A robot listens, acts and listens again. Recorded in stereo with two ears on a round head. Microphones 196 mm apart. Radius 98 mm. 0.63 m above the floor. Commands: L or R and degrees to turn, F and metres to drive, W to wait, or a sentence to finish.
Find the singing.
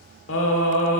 L60
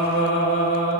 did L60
L55
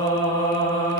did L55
L20
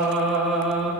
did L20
Facing the singing.